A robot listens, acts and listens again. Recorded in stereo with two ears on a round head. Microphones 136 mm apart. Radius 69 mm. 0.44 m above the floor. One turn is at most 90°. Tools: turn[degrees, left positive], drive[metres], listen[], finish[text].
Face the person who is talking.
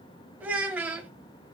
Action: turn[-30]
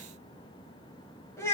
Thought: So it is at 15° left.
Action: turn[15]
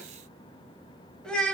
Action: finish[Facing the child speaking.]